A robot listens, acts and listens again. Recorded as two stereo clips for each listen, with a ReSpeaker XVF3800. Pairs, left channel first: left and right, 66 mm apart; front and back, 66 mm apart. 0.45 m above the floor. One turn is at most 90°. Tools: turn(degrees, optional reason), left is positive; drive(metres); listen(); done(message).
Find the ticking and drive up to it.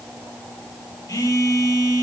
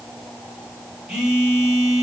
listen()
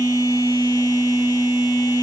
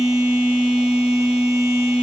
listen()
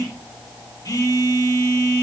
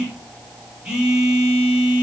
done("I can't make out ticking to turn to.")